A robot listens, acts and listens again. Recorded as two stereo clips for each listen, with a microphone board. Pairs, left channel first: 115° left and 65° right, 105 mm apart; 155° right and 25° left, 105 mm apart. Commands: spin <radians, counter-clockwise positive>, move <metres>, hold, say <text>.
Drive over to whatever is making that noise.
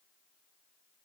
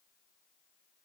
hold
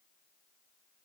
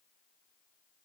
hold
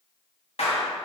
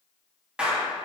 spin 1.83
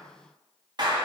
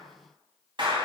spin -0.35
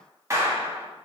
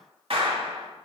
move 1.0
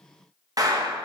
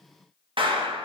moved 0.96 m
spin -0.26
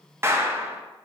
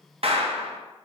move 1.0
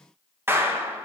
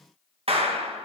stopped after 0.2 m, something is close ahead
say I am next to the clap.